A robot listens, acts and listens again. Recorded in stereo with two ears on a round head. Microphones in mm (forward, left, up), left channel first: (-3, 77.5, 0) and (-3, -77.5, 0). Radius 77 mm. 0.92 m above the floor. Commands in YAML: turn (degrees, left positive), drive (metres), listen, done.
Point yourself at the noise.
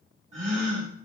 turn: -40
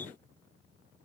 listen: true
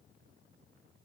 done: "I heard a gasp, but can't make it out now. It was about straight ahead or 100° right."